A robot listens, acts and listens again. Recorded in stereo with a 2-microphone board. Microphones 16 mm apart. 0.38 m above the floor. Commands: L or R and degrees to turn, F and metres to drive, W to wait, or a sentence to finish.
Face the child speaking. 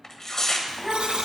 L30
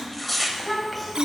L30
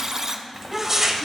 L30
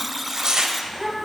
L30
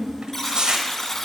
L140
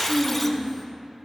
Found it: a child speaking, straight ahead.